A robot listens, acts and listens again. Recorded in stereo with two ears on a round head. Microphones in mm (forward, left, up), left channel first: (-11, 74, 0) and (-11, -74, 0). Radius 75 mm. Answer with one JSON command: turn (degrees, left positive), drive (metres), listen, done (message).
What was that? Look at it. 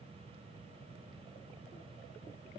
{"listen": true}
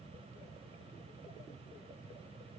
{"listen": true}
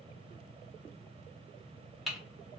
{"turn": 30}
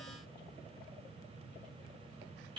{"turn": -35}
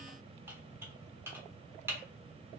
{"turn": -15}
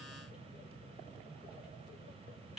{"listen": true}
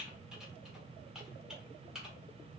{"done": "Facing the typing on a keyboard."}